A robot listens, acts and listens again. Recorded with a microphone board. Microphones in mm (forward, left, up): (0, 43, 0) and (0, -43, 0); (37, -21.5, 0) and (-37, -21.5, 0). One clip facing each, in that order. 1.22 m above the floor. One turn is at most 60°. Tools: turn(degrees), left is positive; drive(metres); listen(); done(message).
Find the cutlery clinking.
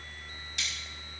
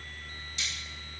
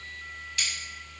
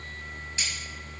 turn(degrees=60)
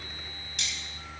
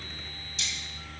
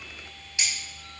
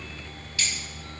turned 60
turn(degrees=60)
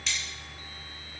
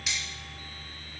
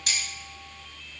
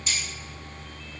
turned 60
turn(degrees=-10)
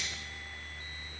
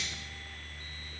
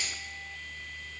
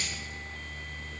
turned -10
done("Facing the cutlery clinking.")